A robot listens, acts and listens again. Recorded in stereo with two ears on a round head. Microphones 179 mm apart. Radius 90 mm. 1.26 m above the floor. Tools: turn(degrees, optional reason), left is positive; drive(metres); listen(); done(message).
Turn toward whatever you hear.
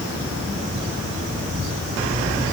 listen()
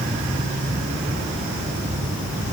listen()
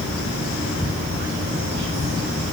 done("I can't make out anything.")